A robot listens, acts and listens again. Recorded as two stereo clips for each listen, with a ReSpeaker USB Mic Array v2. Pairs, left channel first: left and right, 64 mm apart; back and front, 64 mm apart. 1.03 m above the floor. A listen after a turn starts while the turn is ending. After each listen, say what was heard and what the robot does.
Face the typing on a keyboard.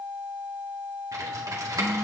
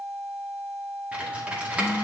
The typing on a keyboard: 70° right. Turn 70° right.
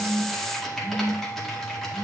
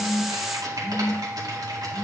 Found it: typing on a keyboard, straight ahead.